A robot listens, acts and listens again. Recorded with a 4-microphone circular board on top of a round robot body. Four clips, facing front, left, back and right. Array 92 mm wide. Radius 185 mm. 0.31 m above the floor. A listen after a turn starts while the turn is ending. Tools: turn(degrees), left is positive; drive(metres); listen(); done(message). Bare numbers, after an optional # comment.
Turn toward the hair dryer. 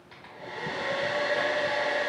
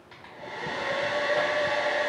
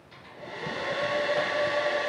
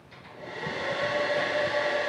# The hair dryer: 60° left.
turn(60)
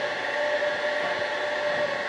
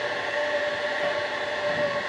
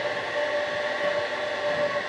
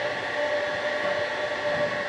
done("Found it: a hair dryer, straight ahead.")